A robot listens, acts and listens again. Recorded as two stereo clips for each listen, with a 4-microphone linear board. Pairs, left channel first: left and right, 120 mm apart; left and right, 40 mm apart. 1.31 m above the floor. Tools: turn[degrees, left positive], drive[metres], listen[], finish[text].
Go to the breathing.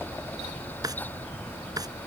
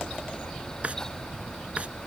Action: listen[]
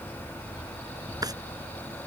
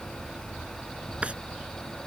Action: listen[]
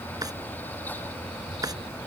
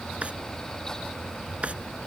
Action: finish[I can't make out breathing, only a drawer.]